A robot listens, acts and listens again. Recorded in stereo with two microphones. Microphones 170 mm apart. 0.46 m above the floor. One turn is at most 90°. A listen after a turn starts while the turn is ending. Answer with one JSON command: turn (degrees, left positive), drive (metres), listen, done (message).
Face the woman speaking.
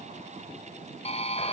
{"listen": true}
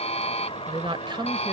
{"turn": -30}
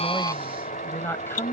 {"turn": 15}
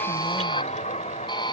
{"listen": true}
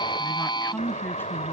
{"turn": 10}
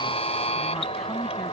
{"listen": true}
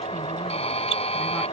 {"listen": true}
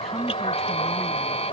{"done": "Found it: a woman speaking, straight ahead."}